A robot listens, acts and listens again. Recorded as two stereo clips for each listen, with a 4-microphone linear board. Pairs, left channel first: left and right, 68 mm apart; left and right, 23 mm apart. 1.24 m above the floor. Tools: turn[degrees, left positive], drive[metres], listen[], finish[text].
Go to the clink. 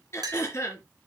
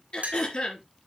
Thought: The clink: about 70° right or 110° right.
Action: turn[-70]
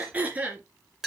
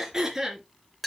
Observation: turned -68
Action: drive[1.0]
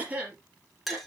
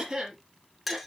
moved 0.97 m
Action: drive[1.0]
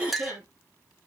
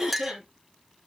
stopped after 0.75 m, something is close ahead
Action: finish[Arrived at the clink, straight ahead.]